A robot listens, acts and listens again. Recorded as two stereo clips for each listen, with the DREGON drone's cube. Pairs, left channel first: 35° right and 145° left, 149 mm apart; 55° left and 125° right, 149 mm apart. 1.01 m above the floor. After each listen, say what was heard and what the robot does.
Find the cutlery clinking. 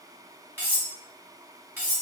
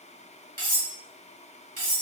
The cutlery clinking: 140° right. Turn 140° right.
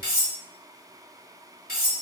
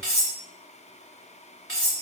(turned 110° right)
The cutlery clinking is now 30° right. Turn 30° right.
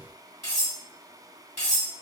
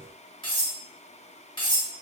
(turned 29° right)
Facing the cutlery clinking, 1 to 2 m away.